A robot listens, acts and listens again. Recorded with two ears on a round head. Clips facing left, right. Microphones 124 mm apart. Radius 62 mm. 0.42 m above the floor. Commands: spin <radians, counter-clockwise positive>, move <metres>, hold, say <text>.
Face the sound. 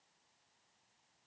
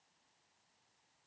hold
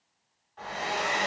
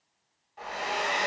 spin -0.52
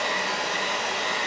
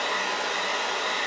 spin 0.35
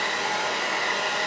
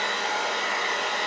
say Facing the hair dryer, 1 to 2 m away.